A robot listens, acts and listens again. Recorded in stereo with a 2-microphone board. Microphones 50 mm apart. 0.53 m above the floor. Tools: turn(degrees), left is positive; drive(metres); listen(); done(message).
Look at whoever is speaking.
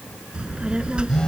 turn(degrees=-20)
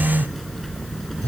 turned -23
done("Facing the child speaking.")